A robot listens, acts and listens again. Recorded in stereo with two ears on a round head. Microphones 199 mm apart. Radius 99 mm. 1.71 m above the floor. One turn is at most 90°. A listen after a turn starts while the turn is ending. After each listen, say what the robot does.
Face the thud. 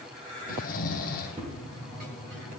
Turn 30° right.
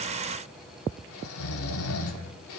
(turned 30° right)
Keep listening.
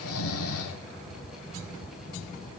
I heard a thud, but can't make it out now. It was about straight ahead or 120° right.